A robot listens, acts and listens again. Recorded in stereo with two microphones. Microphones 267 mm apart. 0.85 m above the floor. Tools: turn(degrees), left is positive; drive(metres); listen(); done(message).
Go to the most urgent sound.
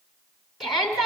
turn(degrees=30)
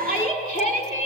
turn(degrees=155)
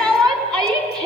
drive(metres=1.0)
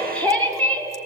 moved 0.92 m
drive(metres=1.0)
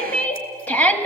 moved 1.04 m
drive(metres=1.0)
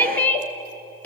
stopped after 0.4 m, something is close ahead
turn(degrees=10)
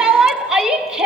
done("Arrived at the shout, straight ahead.")